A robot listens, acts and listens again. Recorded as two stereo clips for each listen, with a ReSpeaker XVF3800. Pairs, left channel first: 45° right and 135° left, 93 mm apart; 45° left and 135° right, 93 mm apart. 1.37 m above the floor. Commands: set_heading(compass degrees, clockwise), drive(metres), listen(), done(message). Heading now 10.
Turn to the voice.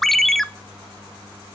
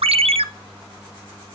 listen()
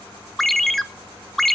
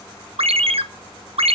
listen()
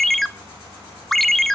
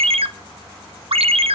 done("I can't make out anyone speaking to turn to.")